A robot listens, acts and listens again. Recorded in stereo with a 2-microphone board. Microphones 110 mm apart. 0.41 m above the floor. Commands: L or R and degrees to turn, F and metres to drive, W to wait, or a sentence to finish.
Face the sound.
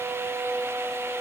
W
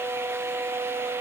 W
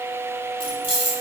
L55
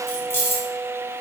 L25
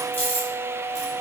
L20
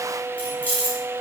L15
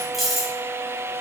Found it: keys jangling, straight ahead, 1 to 2 m away.